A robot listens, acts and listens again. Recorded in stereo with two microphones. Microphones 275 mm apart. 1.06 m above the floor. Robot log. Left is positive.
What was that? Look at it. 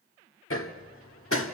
note: The hammering: about 50° left or 130° left.
cmd yaw +50
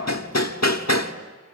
note: So it is at 75° left.
cmd yaw +75
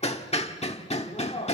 note: The hammering is now 25° left.
cmd yaw +25
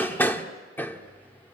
note: The hammering is now 10° left.
cmd yaw +10
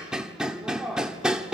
end: Facing the hammering.